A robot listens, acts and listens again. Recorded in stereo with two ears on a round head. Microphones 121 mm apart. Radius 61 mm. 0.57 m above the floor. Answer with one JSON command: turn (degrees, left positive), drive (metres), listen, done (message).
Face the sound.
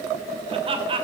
{"turn": -40}
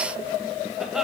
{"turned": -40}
{"listen": true}
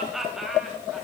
{"done": "Facing the laughter, 2 to 4 m away."}